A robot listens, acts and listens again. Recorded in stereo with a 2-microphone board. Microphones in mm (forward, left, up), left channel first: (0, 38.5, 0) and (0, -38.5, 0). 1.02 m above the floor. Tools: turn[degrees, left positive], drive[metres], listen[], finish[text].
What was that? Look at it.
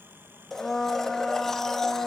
Action: turn[30]
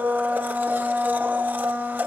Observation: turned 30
Thought: So it is at 25° right.
Action: turn[-25]
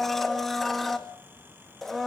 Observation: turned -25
Action: finish[Found it: a blender, straight ahead.]